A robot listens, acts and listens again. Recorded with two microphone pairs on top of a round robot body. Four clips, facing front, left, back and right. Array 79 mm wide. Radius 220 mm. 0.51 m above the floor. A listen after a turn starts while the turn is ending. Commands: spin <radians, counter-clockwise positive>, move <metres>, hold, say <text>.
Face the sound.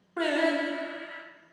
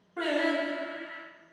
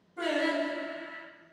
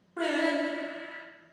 say Found it: singing, straight ahead.